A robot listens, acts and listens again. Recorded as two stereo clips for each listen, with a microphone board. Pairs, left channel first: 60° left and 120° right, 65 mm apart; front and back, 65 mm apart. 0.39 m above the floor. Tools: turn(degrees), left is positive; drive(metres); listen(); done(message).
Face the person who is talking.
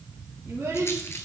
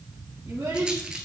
turn(degrees=-170)
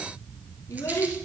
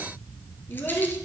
turn(degrees=30)
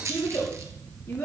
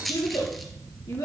done("Facing the child speaking, 2 to 4 m away.")